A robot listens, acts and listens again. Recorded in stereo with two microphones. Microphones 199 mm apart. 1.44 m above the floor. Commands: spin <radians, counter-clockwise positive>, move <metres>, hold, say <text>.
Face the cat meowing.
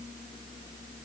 hold
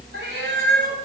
spin -1.22
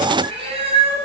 spin -0.52
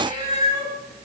spin -0.35
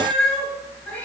say Found it: a cat meowing, straight ahead, over 4 m away.